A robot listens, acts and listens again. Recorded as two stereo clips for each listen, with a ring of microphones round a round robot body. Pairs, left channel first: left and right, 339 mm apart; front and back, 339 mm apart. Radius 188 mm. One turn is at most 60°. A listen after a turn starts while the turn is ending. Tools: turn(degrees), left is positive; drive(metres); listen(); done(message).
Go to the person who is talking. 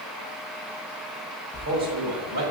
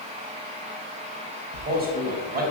turn(degrees=-60)
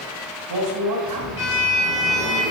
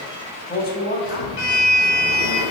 turn(degrees=-60)
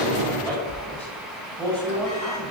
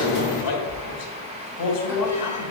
drive(metres=1.0)
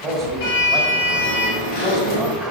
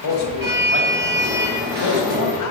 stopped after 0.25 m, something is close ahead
done("Blocked. The man speaking is further on, straight ahead.")